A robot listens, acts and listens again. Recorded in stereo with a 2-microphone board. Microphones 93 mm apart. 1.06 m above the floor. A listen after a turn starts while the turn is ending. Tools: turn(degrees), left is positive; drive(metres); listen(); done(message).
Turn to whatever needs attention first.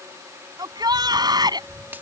turn(degrees=-45)
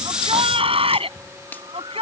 turn(degrees=-90)
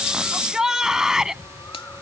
done("Found it: a shout, straight ahead.")